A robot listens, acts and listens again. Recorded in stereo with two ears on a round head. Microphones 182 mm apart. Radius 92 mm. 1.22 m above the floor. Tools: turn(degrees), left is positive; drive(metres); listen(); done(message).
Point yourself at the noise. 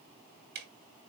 turn(degrees=-55)
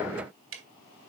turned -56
turn(degrees=-70)
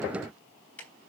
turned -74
done("Facing the ticking.")